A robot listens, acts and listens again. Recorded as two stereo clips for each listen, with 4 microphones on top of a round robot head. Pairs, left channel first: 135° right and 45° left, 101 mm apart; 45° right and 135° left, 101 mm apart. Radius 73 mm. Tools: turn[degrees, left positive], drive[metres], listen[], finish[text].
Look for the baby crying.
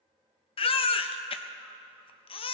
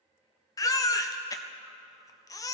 Thought: The baby crying: 105° right.
Action: turn[-105]
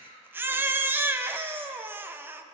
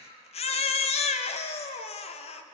Thought: The baby crying is now 25° right.
Action: turn[-25]
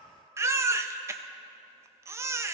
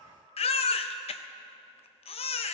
Thought: The baby crying is now 20° right.
Action: turn[-20]
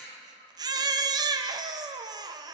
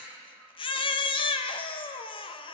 Action: finish[Found it: a baby crying, straight ahead, under 1 m away.]